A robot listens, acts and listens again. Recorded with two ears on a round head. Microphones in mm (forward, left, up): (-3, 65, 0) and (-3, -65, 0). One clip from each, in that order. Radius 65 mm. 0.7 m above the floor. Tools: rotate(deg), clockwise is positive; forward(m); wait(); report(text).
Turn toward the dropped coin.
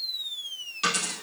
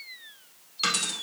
rotate(20)
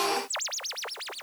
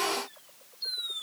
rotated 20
wait()
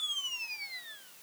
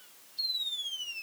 report("I heard a dropped coin, but can't make it out now. It was about straight ahead or 140° right.")